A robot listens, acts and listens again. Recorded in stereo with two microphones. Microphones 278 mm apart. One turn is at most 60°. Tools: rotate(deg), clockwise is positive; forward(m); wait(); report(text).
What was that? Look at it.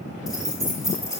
rotate(-30)
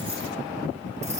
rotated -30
wait()
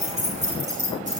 rotate(30)
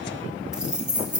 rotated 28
report("Facing the keys jangling.")